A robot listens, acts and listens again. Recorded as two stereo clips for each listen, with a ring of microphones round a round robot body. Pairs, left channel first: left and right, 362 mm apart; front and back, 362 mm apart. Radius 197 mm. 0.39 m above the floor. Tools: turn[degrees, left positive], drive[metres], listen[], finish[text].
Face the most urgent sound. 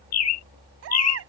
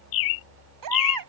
Thought: The baby crying: 145° right.
Action: turn[-145]
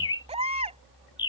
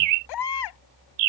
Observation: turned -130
Thought: The baby crying is now 15° right.
Action: turn[-15]
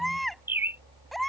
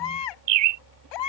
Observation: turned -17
Action: finish[Facing the baby crying.]